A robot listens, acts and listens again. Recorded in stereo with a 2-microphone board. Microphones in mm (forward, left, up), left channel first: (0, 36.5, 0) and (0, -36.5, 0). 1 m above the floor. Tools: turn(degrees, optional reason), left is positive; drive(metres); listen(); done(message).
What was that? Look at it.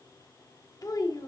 turn(degrees=65, reason="The child speaking: about 65° left or 115° left.")
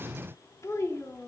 turn(degrees=40, reason="So it is at 40° left.")
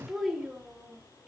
turn(degrees=-10, reason="The child speaking is now 10° right.")
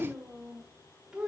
turn(degrees=-10, reason="The child speaking is now 10° right.")
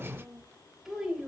done("Facing the child speaking, 2 to 4 m away.")